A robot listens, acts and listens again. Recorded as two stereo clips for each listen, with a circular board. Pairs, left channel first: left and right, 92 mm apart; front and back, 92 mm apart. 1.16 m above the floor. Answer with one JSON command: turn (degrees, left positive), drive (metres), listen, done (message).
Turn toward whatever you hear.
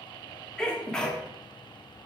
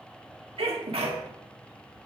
{"turn": 170}
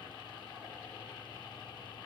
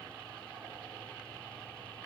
{"done": "Facing where the sneeze came from. I can't hear it now."}